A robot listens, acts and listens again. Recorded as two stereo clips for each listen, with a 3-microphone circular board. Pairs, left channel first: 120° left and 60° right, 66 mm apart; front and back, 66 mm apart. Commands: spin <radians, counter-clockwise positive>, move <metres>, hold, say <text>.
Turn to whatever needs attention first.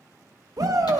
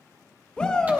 spin -1.31
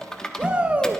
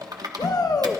spin 0.17
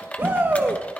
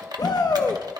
say Facing the shout.